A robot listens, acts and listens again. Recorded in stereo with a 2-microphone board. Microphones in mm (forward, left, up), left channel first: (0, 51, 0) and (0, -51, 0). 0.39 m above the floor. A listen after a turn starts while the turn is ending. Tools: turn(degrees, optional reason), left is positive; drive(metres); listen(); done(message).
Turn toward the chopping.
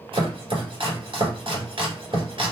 turn(degrees=-60, reason="The chopping: about 60° right or 120° right.")
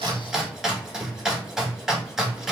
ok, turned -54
done("Found it: chopping, straight ahead.")